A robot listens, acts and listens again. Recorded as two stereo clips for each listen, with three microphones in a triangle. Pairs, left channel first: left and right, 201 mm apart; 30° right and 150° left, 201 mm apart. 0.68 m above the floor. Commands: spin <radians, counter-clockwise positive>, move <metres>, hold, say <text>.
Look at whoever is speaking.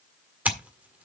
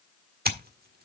hold
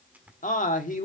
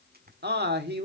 spin 2.27
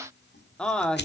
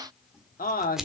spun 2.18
say Found it: a man speaking, straight ahead.